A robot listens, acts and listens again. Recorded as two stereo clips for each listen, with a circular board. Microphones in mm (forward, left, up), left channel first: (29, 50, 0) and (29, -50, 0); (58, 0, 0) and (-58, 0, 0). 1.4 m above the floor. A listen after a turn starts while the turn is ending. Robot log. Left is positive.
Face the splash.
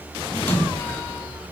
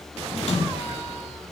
note: The splash: 20° left.
cmd yaw +20
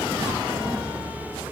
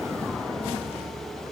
end: I heard a splash from this way, but can't make it out now.